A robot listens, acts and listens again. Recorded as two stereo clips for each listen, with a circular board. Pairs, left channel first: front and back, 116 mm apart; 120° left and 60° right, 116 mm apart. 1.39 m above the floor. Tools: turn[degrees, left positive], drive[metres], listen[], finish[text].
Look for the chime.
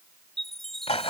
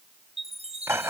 Thought: The chime: 85° right.
Action: turn[-85]
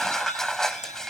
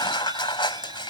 Action: listen[]
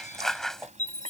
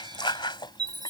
Action: finish[Facing the chime.]